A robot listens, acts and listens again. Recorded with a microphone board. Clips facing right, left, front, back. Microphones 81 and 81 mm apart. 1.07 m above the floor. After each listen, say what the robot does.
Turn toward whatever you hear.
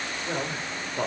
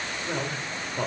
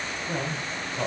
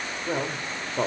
Turn 170° right.
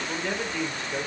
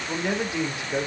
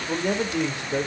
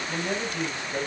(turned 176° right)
Turn 15° left.
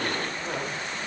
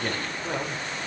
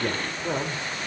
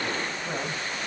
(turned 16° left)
Found it: a man speaking, straight ahead.